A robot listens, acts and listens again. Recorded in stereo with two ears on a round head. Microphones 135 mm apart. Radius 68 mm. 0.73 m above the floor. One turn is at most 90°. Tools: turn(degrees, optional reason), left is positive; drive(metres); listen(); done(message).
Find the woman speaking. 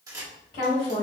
turn(degrees=60, reason="The woman speaking: about 60° left or 120° left.")
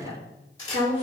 turn(degrees=40, reason="So it is at 40° left.")
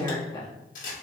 turn(degrees=25, reason="The woman speaking is now 25° left.")
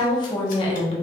turn(degrees=40, reason="The woman speaking is now 40° left.")
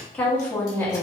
turn(degrees=15, reason="The woman speaking is now 15° left.")
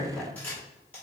done("Found it: a woman speaking, straight ahead, 1 to 2 m away.")